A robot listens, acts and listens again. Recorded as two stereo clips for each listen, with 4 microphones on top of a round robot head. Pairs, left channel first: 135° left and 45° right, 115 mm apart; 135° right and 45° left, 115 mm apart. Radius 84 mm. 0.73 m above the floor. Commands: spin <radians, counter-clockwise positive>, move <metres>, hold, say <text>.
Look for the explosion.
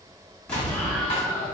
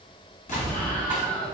spin -2.53
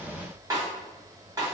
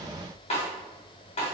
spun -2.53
say Facing where the explosion came from. I can't hear it now.